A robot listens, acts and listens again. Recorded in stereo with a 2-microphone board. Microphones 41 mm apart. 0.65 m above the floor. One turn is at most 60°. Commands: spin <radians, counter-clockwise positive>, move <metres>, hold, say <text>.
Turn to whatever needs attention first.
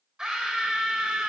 spin -0.35
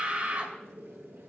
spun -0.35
spin -1.05
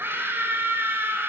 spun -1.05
spin -1.05
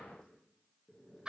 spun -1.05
spin -0.26
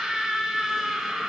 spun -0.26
say Found it: a scream, straight ahead, 2 to 4 m away.